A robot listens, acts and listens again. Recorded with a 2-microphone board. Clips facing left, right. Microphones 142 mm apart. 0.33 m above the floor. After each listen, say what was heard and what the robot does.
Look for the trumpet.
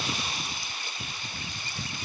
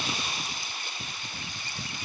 Keep listening.
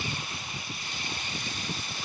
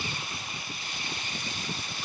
Keep listening.
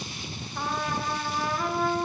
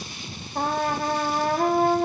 The trumpet: about 50° right or 130° right. Turn 50° right.
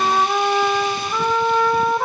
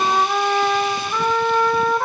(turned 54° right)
Facing the trumpet.